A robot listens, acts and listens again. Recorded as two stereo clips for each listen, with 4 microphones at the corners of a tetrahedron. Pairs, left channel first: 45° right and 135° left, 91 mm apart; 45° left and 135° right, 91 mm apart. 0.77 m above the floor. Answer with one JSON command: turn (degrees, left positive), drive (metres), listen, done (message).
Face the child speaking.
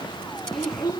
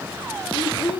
{"turn": 10}
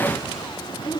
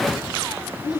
{"done": "Facing the child speaking."}